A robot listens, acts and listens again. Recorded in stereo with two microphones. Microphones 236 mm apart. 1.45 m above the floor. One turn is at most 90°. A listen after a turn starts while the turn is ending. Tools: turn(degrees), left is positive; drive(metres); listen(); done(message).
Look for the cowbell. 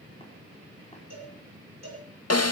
turn(degrees=-90)
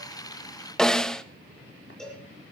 done("Facing the cowbell, over 4 m away.")